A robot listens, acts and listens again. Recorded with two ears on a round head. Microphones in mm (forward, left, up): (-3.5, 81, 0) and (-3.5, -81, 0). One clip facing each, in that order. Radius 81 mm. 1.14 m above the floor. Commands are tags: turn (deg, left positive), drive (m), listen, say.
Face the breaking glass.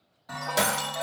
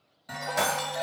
<turn deg="40"/>
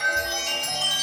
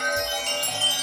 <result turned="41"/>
<listen/>
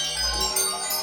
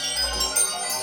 <say>I heard breaking glass, but can't make it out now. It was about straight ahead or 100° left.</say>